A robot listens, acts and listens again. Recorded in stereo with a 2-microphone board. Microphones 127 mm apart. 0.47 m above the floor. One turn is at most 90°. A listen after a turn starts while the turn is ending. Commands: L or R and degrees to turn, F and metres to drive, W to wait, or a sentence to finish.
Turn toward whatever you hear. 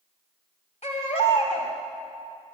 L60
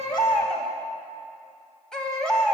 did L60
Found it: a baby crying, straight ahead, 2 to 4 m away.